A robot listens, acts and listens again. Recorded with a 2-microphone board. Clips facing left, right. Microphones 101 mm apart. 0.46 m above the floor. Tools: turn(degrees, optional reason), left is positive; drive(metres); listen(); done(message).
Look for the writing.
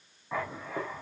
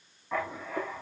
turn(degrees=30)
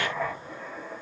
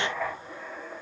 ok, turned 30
turn(degrees=140, reason="So it is at 140° left.")
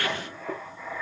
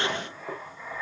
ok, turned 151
turn(degrees=-10, reason="The writing is now 10° right.")
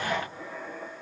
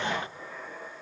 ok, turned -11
done("Facing the writing, over 4 m away.")